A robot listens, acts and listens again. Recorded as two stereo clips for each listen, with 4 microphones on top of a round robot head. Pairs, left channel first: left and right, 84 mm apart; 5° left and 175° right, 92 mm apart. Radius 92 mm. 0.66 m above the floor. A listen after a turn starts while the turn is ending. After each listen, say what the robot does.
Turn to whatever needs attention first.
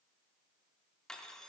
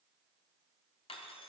Keep listening.
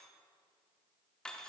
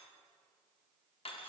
Keep listening.
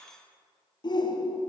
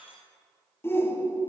Turn 65° left.
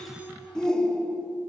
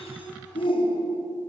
Found it: a shout, straight ahead.